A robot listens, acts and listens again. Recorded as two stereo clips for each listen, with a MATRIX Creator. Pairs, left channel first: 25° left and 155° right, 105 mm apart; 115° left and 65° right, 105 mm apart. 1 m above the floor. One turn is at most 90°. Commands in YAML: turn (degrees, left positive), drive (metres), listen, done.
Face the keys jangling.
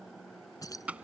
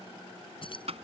turn: 80
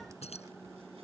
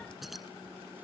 turn: 20
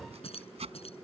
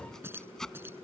done: "Facing the keys jangling."